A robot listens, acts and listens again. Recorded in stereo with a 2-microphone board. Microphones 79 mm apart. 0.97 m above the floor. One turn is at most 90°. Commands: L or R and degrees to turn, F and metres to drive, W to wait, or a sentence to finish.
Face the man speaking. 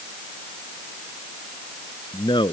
L90
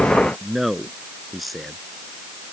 Found it: a man speaking, straight ahead.